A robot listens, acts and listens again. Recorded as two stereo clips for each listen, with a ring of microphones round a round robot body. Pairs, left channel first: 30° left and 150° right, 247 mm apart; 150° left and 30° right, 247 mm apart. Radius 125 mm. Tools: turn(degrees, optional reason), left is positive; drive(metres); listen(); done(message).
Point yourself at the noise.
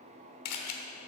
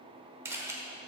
turn(degrees=50, reason="The camera shutter: 50° left.")
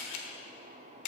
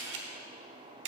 turn(degrees=10, reason="The camera shutter is now 10° left.")
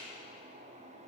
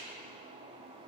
listen()
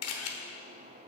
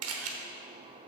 done("Found it: a camera shutter, straight ahead.")